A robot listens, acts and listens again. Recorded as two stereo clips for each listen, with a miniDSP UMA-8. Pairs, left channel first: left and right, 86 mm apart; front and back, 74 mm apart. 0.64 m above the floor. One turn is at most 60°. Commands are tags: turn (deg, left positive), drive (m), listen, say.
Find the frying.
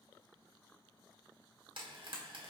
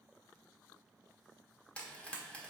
<turn deg="-60"/>
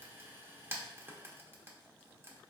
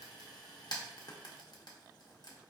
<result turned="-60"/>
<turn deg="-25"/>
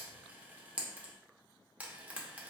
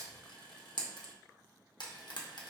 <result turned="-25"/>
<turn deg="-15"/>
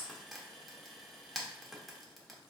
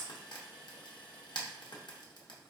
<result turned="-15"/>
<say>Found it: frying, straight ahead.</say>